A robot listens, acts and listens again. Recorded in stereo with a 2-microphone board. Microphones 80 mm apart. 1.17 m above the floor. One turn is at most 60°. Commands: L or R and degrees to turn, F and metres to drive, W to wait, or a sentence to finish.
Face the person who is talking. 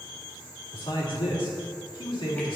L60
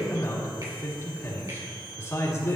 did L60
L35
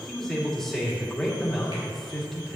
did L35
Facing the man speaking.